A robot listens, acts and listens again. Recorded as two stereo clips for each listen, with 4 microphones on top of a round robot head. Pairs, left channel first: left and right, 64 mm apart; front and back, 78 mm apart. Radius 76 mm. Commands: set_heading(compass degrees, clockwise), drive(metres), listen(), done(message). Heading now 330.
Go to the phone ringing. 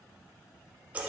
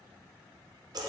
listen()
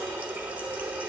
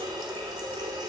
listen()
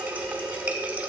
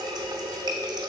done("I can't make out a phone ringing, only a running tap.")